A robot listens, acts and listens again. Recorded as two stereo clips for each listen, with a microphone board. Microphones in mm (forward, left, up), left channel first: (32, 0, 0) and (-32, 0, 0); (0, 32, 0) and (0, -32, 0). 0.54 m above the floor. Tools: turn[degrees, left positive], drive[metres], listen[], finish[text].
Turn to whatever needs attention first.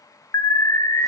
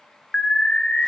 Thought: The alarm: 15° left.
Action: turn[15]
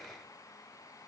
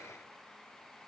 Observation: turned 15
Action: listen[]
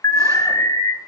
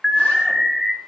Action: finish[Found it: an alarm, straight ahead, under 1 m away.]